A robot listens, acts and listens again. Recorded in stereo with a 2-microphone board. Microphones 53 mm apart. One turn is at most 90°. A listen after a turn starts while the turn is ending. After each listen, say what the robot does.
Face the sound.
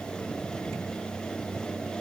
Keep listening.
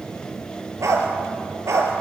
Turn 65° right.
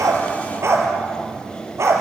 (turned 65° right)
Turn 65° right.
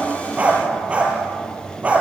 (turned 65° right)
Turn 25° right.
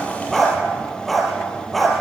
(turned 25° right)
Found it: a dog barking, straight ahead, over 4 m away.